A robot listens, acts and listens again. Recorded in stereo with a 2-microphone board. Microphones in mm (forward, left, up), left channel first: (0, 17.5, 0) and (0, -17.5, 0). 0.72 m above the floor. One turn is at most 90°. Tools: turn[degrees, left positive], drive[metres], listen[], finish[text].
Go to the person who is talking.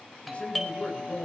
Thought: The man speaking: about 35° left or 145° left.
Action: turn[35]
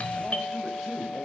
Action: drive[1.0]
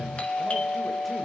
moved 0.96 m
Action: listen[]
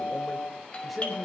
Action: drive[1.0]
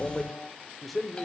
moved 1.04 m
Action: drive[1.0]
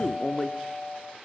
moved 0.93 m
Action: drive[1.0]
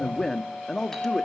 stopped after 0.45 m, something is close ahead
Thought: The man speaking is now 15° left.
Action: turn[15]
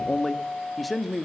Action: finish[I am next to the man speaking.]